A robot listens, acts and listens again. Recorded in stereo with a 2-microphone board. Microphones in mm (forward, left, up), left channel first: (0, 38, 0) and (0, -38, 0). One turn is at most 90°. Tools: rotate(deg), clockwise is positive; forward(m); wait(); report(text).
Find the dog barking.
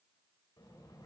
wait()
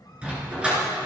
rotate(15)
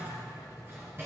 wait()
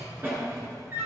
rotate(90)
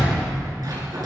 rotate(55)
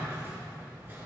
wait()
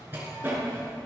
rotate(30)
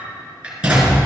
rotate(15)
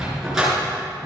report("Found it: a dog barking, straight ahead, over 4 m away.")